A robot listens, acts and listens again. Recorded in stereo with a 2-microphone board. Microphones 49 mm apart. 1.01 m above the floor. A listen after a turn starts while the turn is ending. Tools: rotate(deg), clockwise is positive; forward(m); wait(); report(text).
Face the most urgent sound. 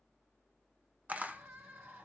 rotate(65)
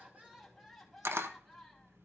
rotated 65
report("Facing the crying.")